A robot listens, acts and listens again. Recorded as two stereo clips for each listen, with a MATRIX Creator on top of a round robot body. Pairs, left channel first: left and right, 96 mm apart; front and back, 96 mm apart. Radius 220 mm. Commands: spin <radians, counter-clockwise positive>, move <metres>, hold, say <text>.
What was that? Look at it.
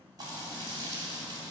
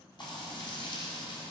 spin -0.70
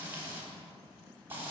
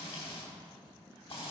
spin -0.35
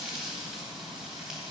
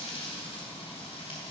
say Found it: frying, straight ahead.